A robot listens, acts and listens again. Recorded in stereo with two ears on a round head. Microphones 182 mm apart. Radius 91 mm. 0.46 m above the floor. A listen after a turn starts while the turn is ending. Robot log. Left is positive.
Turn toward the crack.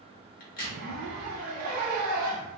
note: The crack: about 45° left or 135° left.
cmd yaw +45
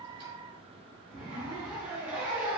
cmd idle
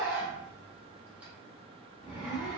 end: I heard a crack, but can't make it out now. It was about straight ahead or 90° left.